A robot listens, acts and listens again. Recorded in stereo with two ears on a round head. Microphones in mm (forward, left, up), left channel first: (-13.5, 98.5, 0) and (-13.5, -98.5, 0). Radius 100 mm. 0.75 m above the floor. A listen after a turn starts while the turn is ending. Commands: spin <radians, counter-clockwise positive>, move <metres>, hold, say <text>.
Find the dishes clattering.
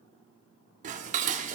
spin -0.61
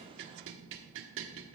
spin -1.92
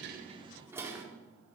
spin -0.17
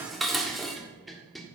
say Facing the dishes clattering.